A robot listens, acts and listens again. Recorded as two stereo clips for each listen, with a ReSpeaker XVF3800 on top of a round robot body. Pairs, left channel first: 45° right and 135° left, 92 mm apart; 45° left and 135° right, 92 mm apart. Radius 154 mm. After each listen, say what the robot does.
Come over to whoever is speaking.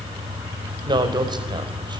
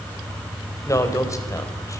Turn 100° left.
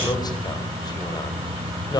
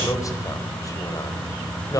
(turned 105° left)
Keep listening.
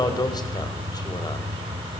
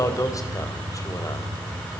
Drive 1.0 m forward.
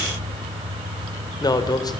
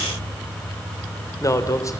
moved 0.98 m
Drive 1.0 m forward.
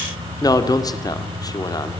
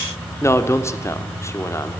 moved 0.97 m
Turn 10° right.
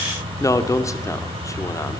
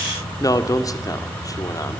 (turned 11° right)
Drive 1.0 m forward.
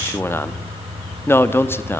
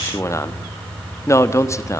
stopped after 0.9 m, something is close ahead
I am next to the man speaking.